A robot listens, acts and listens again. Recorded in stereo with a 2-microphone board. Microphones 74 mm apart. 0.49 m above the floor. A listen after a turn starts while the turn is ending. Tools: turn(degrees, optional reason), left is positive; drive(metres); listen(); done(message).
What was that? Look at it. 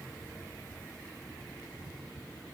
listen()
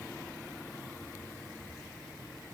listen()
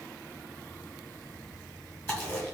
turn(degrees=30, reason="The chewing: about 30° left or 150° left.")
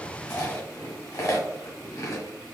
turn(degrees=125, reason="So it is at 125° left.")
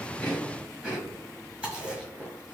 turn(degrees=-10, reason="The chewing is now 10° right.")
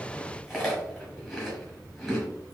done("Facing the chewing, 1 to 2 m away.")